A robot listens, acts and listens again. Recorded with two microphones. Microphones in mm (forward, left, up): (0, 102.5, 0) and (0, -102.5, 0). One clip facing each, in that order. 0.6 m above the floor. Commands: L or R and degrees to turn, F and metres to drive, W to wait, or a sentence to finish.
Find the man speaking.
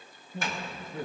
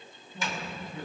L50
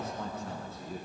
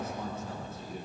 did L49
L75
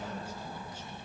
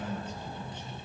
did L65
L10
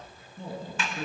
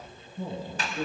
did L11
Found it: a man speaking, straight ahead.